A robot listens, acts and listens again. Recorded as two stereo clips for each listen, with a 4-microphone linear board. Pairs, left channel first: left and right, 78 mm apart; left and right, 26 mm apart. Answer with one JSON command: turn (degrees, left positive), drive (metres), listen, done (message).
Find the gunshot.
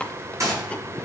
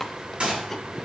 {"turn": -40}
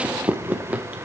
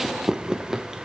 {"listen": true}
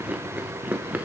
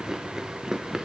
{"done": "I heard a gunshot, but can't make it out now. It was about straight ahead or 100° right."}